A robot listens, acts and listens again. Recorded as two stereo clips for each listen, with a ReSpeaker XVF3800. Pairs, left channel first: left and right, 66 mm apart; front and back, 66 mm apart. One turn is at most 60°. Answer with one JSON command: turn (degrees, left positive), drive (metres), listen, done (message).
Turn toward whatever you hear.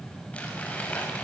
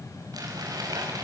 {"turn": 60}
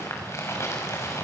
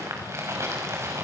{"turn": 60}
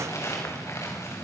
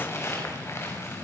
{"turn": 50}
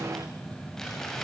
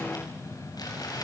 {"turn": 10}
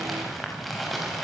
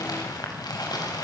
{"done": "Found it: crumpling, straight ahead."}